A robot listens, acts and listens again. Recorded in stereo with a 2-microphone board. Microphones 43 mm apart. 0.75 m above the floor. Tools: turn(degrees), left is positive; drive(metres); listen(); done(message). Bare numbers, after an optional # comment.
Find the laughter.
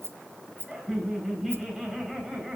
turn(-30)
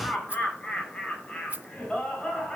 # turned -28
# So it is at 25° left.
turn(25)
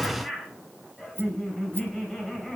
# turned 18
done("Facing the laughter.")